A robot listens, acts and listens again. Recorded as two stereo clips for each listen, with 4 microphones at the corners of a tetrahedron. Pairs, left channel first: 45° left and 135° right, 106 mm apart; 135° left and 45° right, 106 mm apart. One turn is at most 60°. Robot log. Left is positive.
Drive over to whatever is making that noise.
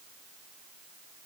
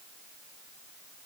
cmd idle
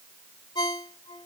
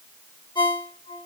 note: The ringtone: 90° left.
cmd yaw +60
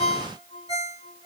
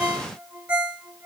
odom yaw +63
note: The ringtone is now 25° left.
cmd yaw +25
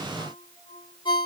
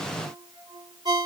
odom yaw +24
cmd fwd 1.0
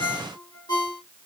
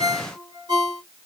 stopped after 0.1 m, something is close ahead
end: Blocked. The ringtone is further on, straight ahead.